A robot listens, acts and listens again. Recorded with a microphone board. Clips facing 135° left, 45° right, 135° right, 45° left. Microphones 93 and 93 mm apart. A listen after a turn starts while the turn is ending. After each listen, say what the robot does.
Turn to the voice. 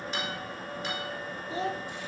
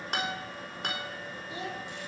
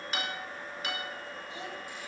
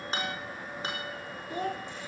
Turn 80° left.
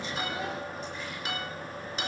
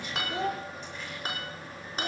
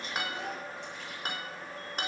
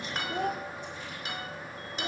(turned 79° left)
Keep listening.
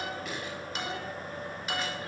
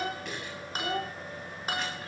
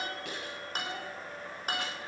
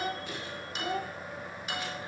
Found it: a child speaking, straight ahead, 1 to 2 m away.